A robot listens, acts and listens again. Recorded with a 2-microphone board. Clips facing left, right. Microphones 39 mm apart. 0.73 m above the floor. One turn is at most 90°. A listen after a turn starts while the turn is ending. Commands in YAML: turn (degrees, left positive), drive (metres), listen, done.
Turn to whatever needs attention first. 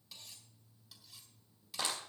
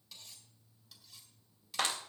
listen: true
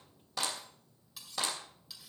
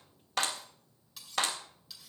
listen: true
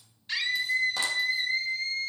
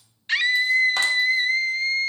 turn: -65
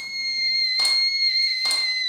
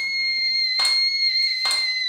done: "Found it: a scream, straight ahead."